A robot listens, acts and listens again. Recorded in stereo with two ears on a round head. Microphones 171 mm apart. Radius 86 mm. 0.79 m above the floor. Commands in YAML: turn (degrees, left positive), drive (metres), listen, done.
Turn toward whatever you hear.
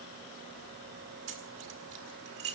turn: -55
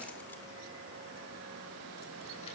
listen: true
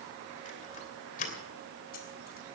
turn: 45
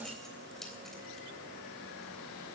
listen: true
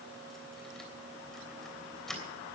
done: "Facing the keys jangling, 2 to 4 m away."